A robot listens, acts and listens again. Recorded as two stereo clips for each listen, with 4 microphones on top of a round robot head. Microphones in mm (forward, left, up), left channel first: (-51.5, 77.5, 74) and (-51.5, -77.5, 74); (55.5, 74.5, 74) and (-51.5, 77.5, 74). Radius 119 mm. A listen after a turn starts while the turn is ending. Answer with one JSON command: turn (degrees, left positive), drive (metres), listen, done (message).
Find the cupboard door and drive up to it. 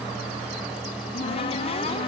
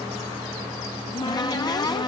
{"turn": 45}
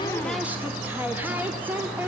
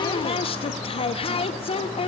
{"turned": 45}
{"turn": -10}
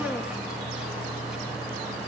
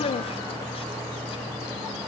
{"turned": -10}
{"drive": 1.0}
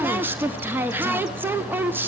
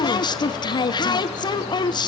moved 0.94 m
{"turn": -20}
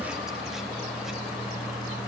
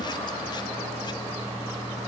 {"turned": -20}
{"listen": true}
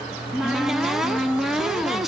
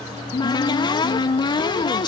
{"drive": 1.0}
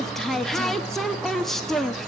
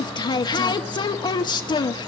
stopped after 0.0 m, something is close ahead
{"done": "Arrived at the cupboard door, straight ahead."}